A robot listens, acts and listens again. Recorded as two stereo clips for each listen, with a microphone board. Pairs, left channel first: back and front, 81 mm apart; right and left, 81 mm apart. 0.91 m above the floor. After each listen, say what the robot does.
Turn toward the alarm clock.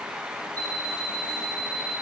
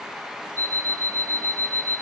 Turn 45° left.
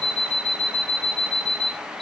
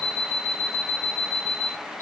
Turn 20° right.
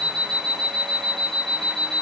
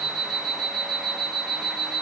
Found it: an alarm clock, straight ahead, under 1 m away.